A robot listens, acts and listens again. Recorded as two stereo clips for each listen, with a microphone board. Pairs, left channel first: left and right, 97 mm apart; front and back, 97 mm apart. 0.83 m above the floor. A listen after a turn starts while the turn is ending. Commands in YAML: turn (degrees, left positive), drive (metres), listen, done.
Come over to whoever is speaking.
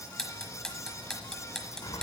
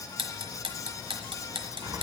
listen: true
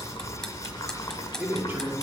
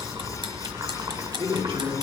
turn: -155
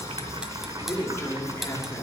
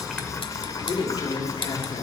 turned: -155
turn: 30
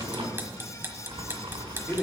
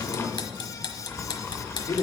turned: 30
drive: 1.0
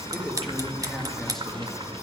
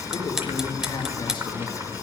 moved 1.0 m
drive: 1.0
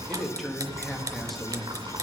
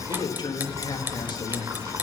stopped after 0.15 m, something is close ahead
done: "Arrived at the man speaking, straight ahead."